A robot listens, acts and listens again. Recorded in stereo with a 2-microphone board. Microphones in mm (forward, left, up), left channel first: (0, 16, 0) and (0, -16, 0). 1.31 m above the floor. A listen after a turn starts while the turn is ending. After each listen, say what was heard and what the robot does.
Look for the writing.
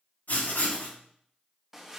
Turn 90° left.
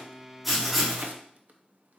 Found it: writing, straight ahead, 2 to 4 m away.